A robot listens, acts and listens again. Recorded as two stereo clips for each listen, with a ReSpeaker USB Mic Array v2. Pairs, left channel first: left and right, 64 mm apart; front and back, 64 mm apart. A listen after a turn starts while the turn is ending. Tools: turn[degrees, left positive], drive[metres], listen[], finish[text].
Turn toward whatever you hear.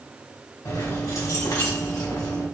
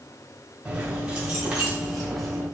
Thought: The keys jangling: 90° left.
Action: turn[90]
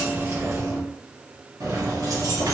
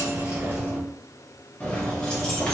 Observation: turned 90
Thought: The keys jangling is now 80° right.
Action: turn[-80]
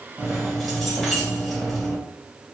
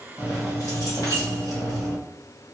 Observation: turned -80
Action: finish[Facing the keys jangling.]